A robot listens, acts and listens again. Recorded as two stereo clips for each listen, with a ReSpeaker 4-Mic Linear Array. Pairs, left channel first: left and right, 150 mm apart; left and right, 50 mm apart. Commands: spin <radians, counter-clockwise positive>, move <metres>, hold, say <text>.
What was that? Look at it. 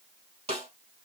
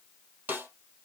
spin -0.79
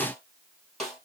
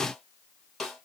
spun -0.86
say Found it: a snare drum, straight ahead.